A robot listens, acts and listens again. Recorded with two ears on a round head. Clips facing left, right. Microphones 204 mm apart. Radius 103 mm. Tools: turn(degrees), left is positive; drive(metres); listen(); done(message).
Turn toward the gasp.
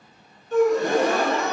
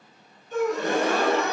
turn(degrees=40)
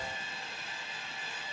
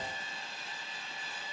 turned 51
listen()
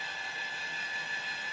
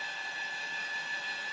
done("I heard a gasp, but can't make it out now. It was about 10° right or 90° left.")